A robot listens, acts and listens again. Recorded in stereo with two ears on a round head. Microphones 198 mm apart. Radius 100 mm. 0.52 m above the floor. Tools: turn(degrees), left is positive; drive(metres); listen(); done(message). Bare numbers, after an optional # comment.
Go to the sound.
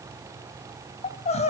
# The crying: about 35° left or 145° left.
turn(35)
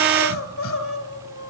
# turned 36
# So it is at 110° left.
turn(110)
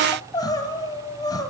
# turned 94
# The crying is now 20° left.
turn(20)
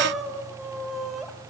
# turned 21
drive(1.0)
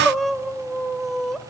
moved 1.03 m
drive(1.0)
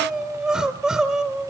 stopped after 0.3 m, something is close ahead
done("I am next to the crying.")